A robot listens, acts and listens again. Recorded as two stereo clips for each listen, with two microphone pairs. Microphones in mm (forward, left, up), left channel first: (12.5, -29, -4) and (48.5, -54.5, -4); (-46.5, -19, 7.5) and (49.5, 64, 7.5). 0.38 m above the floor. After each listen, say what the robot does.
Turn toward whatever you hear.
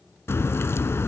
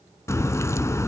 Turn 155° left.
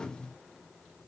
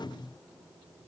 I heard a crack from this way, but can't make it out now.